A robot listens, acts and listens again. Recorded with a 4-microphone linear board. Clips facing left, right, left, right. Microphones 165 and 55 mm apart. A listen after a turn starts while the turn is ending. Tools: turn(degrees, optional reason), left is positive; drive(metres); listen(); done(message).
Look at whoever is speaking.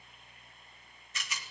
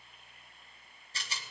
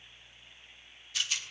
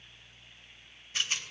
listen()
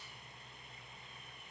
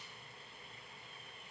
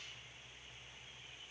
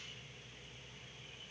listen()
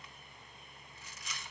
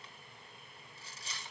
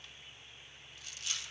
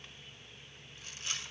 done("I can't make out anyone speaking to turn to.")